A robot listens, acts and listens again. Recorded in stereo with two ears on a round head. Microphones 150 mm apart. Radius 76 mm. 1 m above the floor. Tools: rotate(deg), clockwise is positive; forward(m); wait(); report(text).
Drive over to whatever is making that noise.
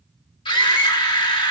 rotate(-30)
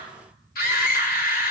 rotate(-120)
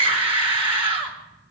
rotate(30)
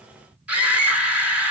rotate(10)
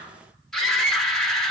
forward(1.0)
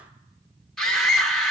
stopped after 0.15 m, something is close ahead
report("Blocked. The scream is further on, straight ahead.")